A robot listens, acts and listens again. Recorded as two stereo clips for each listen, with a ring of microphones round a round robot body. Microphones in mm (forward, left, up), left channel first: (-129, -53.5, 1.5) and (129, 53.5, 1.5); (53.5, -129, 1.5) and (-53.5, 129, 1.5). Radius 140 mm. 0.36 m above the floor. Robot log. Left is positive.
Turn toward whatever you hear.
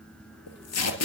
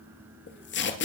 note: The tape being pulled: 120° right.
cmd yaw -120
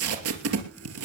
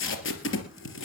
note: The tape being pulled is now 20° right.
cmd yaw -20
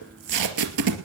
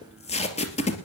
end: Facing the tape being pulled.